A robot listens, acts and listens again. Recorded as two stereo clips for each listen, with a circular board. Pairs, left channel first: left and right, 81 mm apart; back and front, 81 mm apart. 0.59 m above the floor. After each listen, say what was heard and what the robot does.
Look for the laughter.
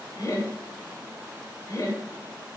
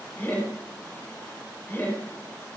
The laughter: 125° left. Turn 125° left.
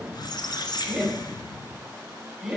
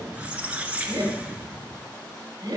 Facing the laughter.